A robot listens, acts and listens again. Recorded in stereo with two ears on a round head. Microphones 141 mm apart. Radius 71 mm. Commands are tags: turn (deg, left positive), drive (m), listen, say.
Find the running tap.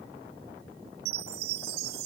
<listen/>
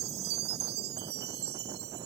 <listen/>
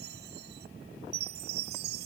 <say>I can't make out a running tap, only a chime.</say>